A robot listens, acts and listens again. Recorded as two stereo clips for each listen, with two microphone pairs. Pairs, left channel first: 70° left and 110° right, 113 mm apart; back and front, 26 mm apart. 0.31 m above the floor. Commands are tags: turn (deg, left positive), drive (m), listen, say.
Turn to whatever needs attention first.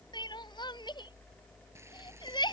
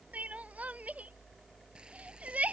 <turn deg="20"/>
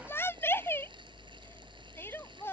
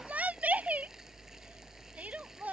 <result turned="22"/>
<say>Facing the crying.</say>